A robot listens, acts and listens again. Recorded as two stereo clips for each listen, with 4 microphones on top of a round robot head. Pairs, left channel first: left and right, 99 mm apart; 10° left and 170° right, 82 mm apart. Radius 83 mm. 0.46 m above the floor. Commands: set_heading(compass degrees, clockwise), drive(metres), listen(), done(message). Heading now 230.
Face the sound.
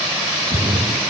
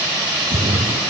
set_heading(10)
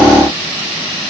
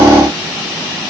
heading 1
set_heading(11)
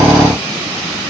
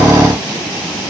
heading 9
done("Facing where the splash came from. I can't hear it now.")